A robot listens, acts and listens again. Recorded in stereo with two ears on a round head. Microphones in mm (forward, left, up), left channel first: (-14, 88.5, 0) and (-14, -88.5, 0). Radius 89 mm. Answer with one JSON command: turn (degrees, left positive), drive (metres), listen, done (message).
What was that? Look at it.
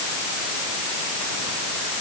{"listen": true}
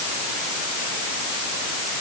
{"listen": true}
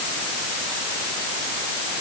{"done": "I can't make out anything."}